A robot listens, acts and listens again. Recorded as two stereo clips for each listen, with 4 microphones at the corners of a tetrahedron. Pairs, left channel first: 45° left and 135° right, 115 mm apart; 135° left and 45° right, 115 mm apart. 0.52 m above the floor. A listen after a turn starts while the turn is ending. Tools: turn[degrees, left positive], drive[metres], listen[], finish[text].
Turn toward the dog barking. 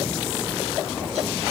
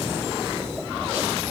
Action: listen[]
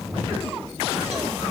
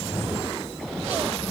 Action: listen[]
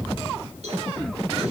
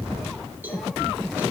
Action: finish[I can't make out a dog barking to turn to.]